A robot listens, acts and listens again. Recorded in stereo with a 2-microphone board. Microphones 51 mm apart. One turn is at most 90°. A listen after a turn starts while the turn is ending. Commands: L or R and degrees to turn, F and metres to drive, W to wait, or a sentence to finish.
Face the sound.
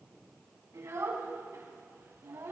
R65
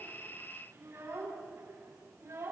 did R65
R55
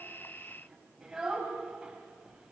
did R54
R10
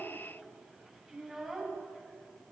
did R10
Found it: a child speaking, straight ahead, over 4 m away.